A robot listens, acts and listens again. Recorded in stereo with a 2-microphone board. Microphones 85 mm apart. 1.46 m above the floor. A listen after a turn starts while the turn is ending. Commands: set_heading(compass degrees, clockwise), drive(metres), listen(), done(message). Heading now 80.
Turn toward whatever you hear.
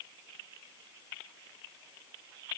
listen()
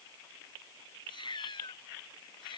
set_heading(20)
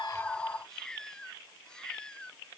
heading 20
set_heading(10)
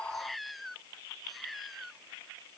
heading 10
done("Facing the cat meowing.")